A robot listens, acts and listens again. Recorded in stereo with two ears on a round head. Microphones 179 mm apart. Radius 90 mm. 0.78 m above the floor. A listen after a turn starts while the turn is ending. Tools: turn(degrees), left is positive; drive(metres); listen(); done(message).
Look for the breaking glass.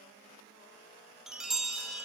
listen()
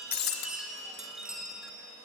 turn(degrees=50)
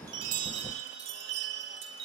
listen()
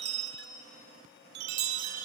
done("I heard breaking glass, but can't make it out now. It was about straight ahead or 80° left.")